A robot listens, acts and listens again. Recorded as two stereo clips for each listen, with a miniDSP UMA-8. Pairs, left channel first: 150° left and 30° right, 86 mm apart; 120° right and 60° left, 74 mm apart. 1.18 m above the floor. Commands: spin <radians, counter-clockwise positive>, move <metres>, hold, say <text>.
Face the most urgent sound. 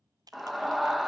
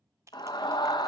spin -2.09
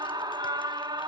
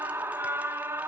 say Found it: a scream, straight ahead.